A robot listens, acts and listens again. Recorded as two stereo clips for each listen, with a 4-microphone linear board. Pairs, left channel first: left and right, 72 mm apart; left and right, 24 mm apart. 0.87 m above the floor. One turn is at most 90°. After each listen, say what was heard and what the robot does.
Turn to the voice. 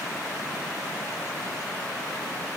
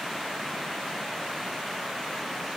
Keep listening.
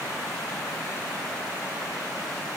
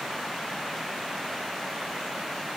Keep listening.
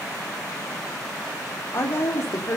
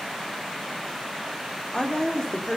The woman speaking: about 40° left or 140° left. Turn 40° left.
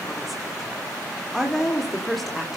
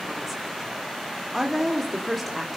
Facing the woman speaking.